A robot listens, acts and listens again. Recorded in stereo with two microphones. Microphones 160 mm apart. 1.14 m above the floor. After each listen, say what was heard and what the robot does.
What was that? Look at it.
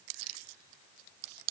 Keep listening.
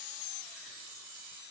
Keep listening.
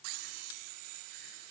I can't make out anything to turn to.